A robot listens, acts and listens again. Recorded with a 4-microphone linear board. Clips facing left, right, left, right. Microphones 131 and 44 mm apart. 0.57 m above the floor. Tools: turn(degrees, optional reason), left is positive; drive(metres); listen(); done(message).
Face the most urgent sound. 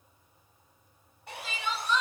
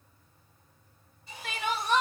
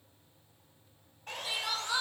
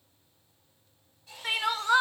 turn(degrees=-60, reason="The crying: about 60° right or 120° right.")
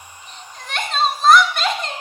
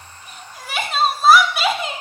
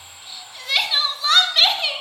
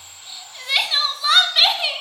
done("Facing the crying.")